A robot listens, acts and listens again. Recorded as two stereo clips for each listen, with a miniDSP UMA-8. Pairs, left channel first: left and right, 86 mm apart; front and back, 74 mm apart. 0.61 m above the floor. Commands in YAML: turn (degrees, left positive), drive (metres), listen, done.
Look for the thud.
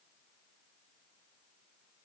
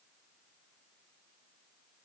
listen: true
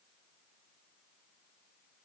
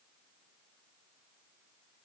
listen: true
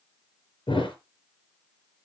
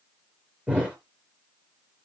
turn: 105
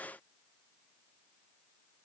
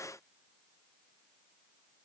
done: "Facing where the thud came from. I can't hear it now."